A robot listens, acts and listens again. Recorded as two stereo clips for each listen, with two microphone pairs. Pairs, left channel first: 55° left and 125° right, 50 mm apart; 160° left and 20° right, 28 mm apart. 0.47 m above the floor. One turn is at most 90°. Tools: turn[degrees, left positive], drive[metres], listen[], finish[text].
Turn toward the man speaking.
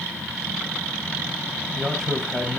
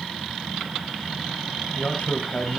Thought: The man speaking: 135° left.
Action: turn[90]
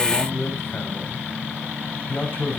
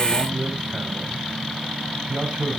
Thought: The man speaking is now 15° left.
Action: turn[15]
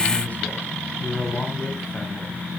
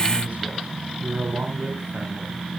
Action: finish[Facing the man speaking.]